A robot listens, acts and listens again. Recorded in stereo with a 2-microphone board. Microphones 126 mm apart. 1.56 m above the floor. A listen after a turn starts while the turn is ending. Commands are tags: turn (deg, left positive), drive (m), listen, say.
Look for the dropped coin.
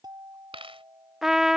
<turn deg="-45"/>
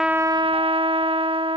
<listen/>
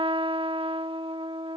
<say>I heard a dropped coin, but can't make it out now. It was about straight ahead or 90° right.</say>